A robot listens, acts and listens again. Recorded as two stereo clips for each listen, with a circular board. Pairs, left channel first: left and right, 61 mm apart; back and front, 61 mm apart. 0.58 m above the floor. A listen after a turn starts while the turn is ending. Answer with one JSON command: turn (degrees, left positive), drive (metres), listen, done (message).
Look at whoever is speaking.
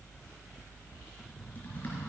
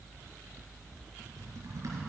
{"listen": true}
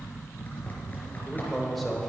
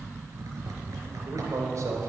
{"done": "Facing the man speaking."}